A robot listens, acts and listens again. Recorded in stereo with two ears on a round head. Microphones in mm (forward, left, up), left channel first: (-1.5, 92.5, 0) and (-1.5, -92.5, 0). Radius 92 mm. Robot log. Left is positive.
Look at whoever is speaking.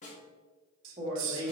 note: The woman speaking: about 25° right or 155° right.
cmd yaw -25
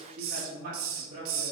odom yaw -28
note: So it is at 140° right.
cmd yaw -140
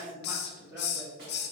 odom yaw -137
note: The woman speaking is now 10° right.
cmd yaw -10
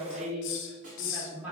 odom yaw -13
end: Found it: a woman speaking, straight ahead.